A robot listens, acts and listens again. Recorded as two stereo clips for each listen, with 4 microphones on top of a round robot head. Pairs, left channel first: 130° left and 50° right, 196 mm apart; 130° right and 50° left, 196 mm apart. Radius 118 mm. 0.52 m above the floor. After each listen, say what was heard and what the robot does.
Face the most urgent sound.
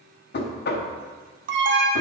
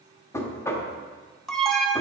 The alarm: 40° right. Turn 40° right.
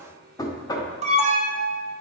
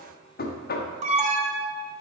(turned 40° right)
Found it: an alarm, straight ahead, under 1 m away.